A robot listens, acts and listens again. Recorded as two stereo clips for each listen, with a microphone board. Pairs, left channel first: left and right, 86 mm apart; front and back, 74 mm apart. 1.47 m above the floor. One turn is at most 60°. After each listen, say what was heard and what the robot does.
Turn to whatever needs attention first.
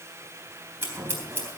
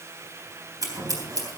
Keep listening.
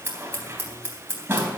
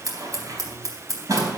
Keep listening.
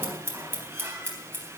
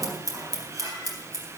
I can't make out anything urgent, only scissors.